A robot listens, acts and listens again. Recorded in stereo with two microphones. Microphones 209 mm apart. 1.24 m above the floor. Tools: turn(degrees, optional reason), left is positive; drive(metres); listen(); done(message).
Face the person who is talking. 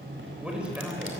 turn(degrees=-30)
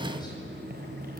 listen()
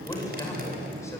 turn(degrees=15, reason="So it is at 15° left.")
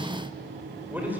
turn(degrees=-10, reason="The man speaking is now 10° right.")
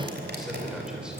listen()
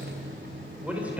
done("Found it: a man speaking, straight ahead.")